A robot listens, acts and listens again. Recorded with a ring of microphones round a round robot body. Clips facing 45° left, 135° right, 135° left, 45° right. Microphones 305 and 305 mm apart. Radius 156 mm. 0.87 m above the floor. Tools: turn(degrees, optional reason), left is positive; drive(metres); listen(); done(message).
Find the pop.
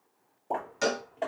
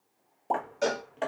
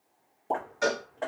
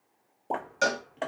turn(degrees=-135, reason="The pop: 135° right.")
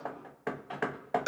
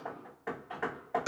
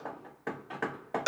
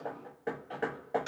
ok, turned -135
done("I heard a pop from this way, but can't make it out now.")